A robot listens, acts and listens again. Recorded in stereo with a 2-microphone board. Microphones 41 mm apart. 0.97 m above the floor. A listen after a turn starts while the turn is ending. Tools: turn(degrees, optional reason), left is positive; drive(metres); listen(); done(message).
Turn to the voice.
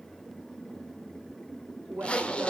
turn(degrees=-55, reason="The woman speaking: about 55° right or 125° right.")
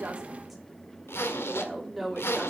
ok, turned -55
done("Found it: a woman speaking, straight ahead, 2 to 4 m away.")